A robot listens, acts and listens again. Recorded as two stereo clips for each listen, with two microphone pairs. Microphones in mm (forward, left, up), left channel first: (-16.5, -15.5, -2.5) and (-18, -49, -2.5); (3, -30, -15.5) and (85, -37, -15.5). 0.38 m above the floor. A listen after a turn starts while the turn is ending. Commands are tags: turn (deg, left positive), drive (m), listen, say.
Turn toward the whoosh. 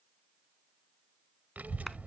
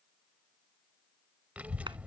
<listen/>
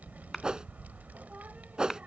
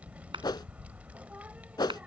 <turn deg="-155"/>
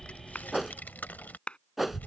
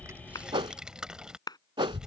<turn deg="-10"/>
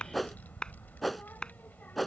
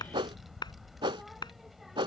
<say>Facing the whoosh.</say>